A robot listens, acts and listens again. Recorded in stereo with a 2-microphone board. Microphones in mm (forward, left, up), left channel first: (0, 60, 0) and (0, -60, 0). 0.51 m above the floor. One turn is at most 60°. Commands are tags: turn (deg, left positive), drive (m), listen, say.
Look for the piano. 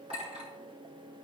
<listen/>
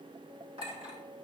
<listen/>
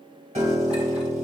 <turn deg="-60"/>
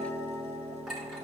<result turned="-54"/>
<turn deg="-60"/>
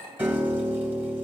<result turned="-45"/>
<turn deg="-15"/>
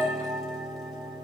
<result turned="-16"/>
<say>Facing the piano.</say>